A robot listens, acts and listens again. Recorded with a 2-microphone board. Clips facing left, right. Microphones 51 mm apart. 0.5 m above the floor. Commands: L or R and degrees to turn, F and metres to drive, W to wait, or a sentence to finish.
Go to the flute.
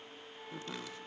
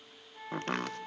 R40
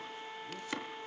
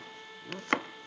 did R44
F1.0
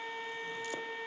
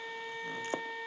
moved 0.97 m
F1.0
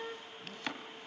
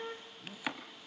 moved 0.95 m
F1.0
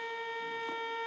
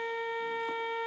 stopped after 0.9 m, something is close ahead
R15
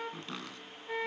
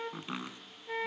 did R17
Arrived at the flute, straight ahead.